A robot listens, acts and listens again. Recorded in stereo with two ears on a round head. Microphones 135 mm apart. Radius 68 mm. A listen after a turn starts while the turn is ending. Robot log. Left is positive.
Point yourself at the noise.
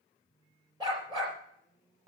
note: The dog barking: about 30° right or 150° right.
cmd yaw -30
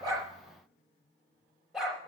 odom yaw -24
end: Facing the dog barking, over 4 m away.